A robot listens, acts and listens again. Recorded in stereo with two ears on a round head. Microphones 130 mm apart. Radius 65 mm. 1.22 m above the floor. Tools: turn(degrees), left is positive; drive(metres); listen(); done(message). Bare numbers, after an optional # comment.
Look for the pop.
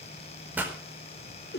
turn(-30)
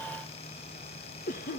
listen()
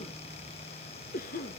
done("I heard a pop, but can't make it out now. It was about 20° left or 140° right.")